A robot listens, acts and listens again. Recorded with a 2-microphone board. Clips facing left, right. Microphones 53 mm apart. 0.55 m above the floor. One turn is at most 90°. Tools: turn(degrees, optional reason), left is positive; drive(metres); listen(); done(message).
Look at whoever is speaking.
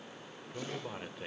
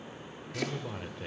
turn(degrees=30)
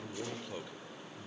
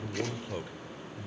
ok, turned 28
turn(degrees=-25, reason="So it is at 25° right.")
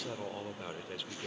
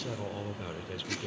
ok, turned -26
done("Found it: a man speaking, straight ahead, 2 to 4 m away.")